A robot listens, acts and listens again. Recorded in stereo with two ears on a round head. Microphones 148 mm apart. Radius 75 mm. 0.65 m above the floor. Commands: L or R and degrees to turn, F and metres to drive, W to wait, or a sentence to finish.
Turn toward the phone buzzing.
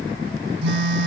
R90
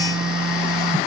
Facing the phone buzzing.